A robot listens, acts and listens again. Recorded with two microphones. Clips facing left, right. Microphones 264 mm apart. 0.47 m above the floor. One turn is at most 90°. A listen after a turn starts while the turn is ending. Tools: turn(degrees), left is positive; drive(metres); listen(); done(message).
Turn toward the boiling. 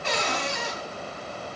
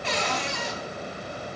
listen()
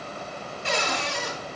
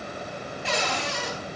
listen()
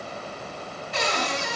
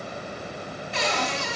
done("I can't make out boiling, only a cupboard door.")